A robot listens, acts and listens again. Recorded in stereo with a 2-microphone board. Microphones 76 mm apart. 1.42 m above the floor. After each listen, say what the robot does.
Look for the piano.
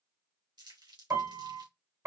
Turn 40° right.
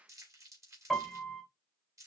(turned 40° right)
Facing the piano, 1 to 2 m away.